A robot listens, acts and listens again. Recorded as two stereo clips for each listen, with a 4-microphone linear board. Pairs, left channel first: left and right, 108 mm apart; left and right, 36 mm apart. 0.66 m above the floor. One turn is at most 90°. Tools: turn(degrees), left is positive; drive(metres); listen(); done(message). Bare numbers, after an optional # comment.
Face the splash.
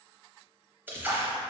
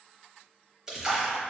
# The splash: about 20° right or 160° right.
turn(-20)
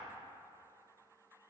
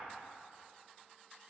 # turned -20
listen()
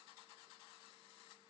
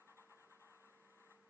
done("I heard a splash, but can't make it out now. It was about straight ahead or 140° right.")